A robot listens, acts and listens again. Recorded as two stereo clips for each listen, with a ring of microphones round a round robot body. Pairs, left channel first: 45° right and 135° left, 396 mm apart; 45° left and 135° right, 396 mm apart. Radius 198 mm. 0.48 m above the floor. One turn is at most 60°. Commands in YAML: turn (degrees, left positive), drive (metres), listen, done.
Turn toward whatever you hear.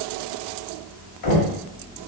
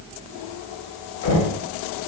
turn: -10
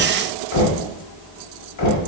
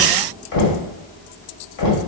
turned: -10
done: "Found it: knocking, straight ahead, 1 to 2 m away."